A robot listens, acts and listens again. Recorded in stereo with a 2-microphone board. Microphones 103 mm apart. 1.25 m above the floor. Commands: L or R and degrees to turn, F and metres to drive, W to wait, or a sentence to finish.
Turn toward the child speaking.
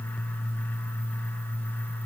W
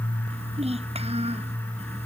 R90
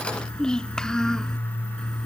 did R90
Found it: a child speaking, straight ahead.